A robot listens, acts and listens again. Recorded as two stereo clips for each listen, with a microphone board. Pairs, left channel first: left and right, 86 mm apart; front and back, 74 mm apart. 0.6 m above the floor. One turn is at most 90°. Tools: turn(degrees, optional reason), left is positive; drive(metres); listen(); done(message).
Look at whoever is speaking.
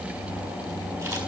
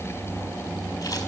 listen()
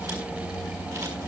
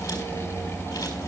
listen()
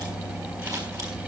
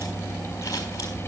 done("I can't make out anyone speaking to turn to.")